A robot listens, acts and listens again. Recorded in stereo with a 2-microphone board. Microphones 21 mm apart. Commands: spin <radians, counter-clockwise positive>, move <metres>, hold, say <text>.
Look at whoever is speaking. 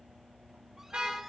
hold
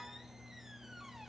hold
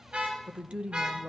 spin -1.22
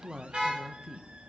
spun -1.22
spin -0.61
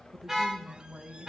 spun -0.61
spin -0.44
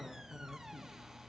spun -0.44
say Facing the woman speaking, 1 to 2 m away.